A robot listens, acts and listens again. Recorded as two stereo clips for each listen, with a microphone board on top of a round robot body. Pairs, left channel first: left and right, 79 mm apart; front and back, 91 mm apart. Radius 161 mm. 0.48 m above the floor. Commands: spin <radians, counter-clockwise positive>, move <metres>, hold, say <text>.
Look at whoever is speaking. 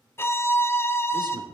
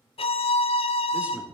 spin -1.83
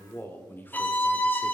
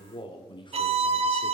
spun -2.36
spin 0.52
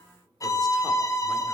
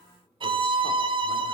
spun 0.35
spin 0.17
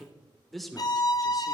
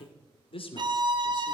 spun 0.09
say Facing the man speaking, 2 to 4 m away.